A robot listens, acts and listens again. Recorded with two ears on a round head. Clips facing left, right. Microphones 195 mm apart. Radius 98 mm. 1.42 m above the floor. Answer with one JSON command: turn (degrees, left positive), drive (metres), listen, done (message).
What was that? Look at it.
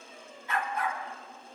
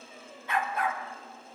{"turn": -55}
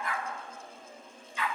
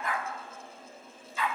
{"turn": -35}
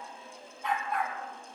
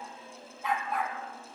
{"done": "Facing the dog barking, 2 to 4 m away."}